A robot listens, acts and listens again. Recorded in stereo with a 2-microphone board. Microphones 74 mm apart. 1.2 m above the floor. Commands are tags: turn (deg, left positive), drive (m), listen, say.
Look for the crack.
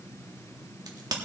<turn deg="-65"/>
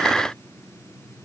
<listen/>
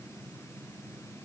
<say>I heard a crack, but can't make it out now. It was about straight ahead or 50° right.</say>